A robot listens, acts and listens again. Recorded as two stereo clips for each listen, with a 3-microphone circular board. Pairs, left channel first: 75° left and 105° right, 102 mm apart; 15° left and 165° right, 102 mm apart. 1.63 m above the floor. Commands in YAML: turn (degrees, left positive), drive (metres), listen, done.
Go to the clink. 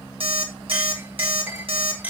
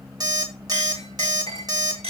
turn: -175
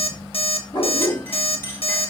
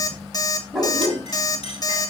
turn: 10
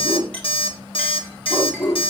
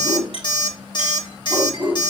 drive: 1.0
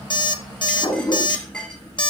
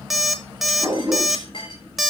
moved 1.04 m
drive: 1.0
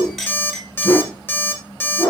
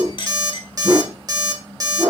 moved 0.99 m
turn: -15
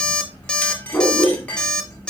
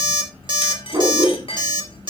drive: 1.0
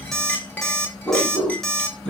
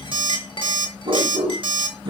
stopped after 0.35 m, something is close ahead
done: "Arrived at the clink, straight ahead."